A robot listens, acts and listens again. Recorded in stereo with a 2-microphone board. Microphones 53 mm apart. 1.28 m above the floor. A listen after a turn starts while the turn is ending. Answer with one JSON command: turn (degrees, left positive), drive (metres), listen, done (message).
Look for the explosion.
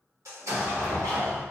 {"turn": -90}
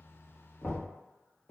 {"done": "Facing where the explosion came from. I can't hear it now."}